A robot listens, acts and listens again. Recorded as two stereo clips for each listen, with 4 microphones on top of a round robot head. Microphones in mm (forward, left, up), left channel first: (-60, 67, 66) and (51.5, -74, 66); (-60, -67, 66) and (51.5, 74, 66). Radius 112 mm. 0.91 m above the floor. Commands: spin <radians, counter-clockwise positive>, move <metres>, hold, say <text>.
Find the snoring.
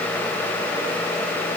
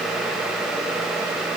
hold
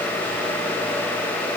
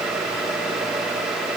hold
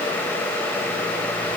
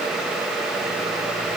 say I can't make out snoring to turn to.